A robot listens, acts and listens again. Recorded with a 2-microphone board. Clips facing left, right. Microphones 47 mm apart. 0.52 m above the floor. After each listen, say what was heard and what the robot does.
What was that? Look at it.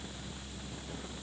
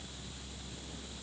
Keep listening.
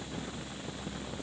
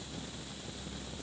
Keep listening.
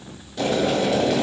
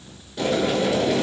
Turn 30° right.
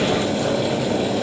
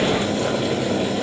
So it is at 140° right. Turn 140° right.
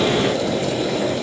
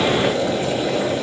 The boiling is now 30° right. Turn 30° right.
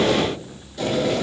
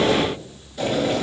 The boiling is now 10° right. Turn 10° right.
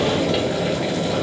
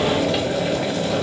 Found it: boiling, straight ahead.